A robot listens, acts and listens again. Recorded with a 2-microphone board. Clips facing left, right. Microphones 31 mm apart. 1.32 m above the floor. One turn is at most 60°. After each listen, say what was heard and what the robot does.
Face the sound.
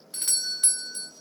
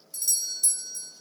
The doorbell: about 50° left or 130° left. Turn 50° left.
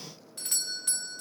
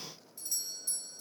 So it is at 75° left. Turn 60° left.
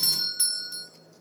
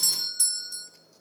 The doorbell is now 20° left. Turn 20° left.
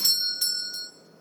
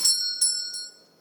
Facing the doorbell, under 1 m away.